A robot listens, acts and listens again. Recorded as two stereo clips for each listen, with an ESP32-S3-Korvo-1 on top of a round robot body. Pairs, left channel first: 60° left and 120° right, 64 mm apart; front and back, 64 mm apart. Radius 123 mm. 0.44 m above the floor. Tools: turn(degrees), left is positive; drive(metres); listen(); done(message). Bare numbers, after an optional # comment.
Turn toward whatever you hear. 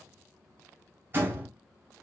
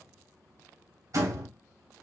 # The door slam: 175° right.
turn(-175)
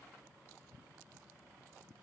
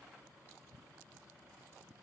done("Facing where the door slam came from. I can't hear it now.")